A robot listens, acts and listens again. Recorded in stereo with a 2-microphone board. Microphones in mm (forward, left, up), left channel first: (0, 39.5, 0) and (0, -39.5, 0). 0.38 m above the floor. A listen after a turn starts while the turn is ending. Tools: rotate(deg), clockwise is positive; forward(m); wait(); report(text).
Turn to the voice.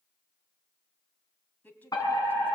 rotate(-20)
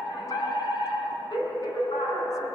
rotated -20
wait()
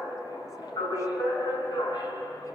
wait()
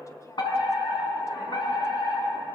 report("I heard a woman speaking, but can't make it out now. It was about straight ahead or 140° left.")